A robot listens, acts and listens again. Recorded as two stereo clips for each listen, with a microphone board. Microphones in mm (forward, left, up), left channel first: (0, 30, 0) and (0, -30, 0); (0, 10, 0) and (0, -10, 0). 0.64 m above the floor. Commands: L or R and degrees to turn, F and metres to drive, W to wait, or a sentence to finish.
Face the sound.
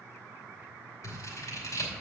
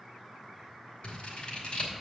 L65
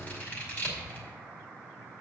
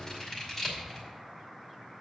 L35
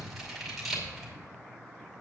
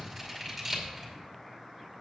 Facing the scissors, 2 to 4 m away.